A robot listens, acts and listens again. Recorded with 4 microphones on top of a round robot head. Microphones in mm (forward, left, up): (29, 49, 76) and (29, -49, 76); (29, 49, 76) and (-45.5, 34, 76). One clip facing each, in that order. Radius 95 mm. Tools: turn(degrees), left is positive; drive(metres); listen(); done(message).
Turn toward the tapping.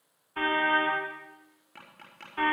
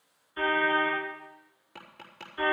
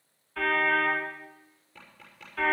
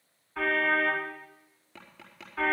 turn(degrees=-170)
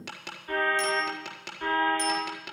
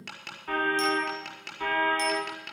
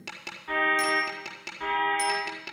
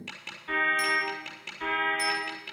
turn(degrees=10)
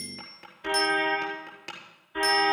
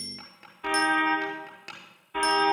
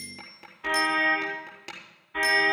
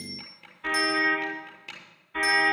done("Facing the tapping.")